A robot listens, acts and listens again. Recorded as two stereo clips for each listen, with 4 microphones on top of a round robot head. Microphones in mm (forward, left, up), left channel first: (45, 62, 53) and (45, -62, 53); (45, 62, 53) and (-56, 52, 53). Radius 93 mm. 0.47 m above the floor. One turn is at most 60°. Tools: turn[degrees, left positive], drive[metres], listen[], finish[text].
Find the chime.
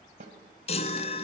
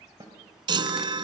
Thought: The chime: 145° left.
Action: turn[60]
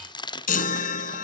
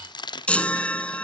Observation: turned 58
Thought: The chime is now 85° left.
Action: turn[60]
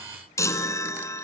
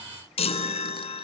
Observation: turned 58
Thought: The chime is now 25° left.
Action: turn[25]
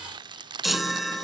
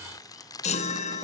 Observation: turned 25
Action: finish[Facing the chime.]